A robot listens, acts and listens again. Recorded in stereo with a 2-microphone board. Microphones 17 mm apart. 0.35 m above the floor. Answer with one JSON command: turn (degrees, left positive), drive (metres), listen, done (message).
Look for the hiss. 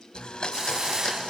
{"turn": -30}
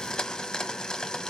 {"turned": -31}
{"listen": true}
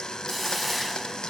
{"done": "Found it: a hiss, straight ahead, under 1 m away."}